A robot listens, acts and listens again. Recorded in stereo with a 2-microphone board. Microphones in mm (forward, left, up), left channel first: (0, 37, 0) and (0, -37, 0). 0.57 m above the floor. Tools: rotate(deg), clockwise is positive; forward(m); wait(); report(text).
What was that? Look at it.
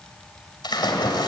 rotate(-70)
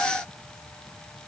wait()
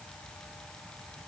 report("I heard a splash, but can't make it out now. It was about straight ahead or 40° left.")